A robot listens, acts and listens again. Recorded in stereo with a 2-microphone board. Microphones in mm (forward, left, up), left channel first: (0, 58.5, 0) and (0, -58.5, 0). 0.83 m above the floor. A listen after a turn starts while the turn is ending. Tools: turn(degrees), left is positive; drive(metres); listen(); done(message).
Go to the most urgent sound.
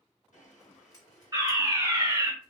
turn(degrees=-35)
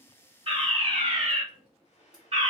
turn(degrees=-105)
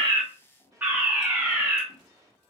turn(degrees=-15)
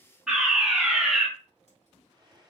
drive(metres=1.0)
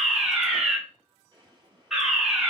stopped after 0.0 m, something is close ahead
done("Blocked. The fire alarm is further on, straight ahead.")